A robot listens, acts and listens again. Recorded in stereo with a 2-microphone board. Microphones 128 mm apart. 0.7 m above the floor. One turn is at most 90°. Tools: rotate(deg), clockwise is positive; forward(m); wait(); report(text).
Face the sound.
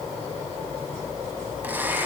rotate(30)
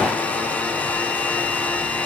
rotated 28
rotate(-10)
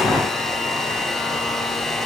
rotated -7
report("Found it: a blender, straight ahead, 1 to 2 m away.")